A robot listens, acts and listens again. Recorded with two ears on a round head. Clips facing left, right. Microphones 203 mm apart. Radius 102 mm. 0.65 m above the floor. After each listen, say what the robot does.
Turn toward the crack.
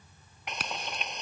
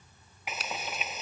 Turn 45° left.
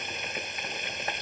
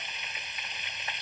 Keep listening.
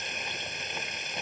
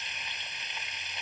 I heard a crack, but can't make it out now. It was about straight ahead or 90° left.